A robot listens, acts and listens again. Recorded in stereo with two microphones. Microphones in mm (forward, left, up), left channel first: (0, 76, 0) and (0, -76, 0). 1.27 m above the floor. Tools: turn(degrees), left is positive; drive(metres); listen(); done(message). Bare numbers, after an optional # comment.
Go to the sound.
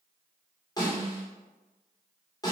# The snare drum: about 25° left or 155° left.
turn(25)
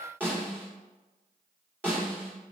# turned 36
# So it is at 10° right.
turn(-10)
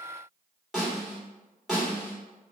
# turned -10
drive(1.0)
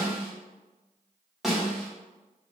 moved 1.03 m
drive(1.0)
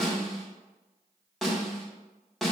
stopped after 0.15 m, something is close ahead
done("Arrived at the snare drum, straight ahead.")